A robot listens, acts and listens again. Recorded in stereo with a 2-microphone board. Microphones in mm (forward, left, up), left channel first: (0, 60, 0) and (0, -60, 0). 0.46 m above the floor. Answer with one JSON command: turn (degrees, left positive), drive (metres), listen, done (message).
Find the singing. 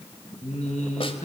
{"turn": 70}
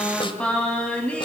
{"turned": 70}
{"turn": 10}
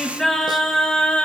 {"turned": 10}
{"turn": 10}
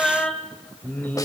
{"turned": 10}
{"turn": 15}
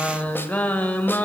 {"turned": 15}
{"turn": 15}
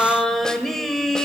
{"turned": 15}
{"done": "Facing the singing."}